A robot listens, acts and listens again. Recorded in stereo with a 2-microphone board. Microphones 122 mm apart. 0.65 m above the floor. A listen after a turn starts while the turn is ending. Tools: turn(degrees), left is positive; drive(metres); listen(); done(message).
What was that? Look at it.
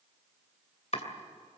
turn(degrees=65)
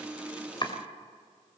turn(degrees=45)
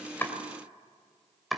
done("Found it: chopping, straight ahead.")